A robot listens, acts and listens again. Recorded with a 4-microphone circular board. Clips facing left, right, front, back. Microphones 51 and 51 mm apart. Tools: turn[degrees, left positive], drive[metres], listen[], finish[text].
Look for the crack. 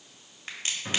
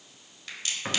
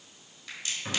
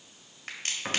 Thought: The crack: 150° left.
Action: turn[150]
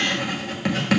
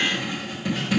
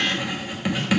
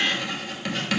Action: finish[Facing where the crack came from. I can't hear it now.]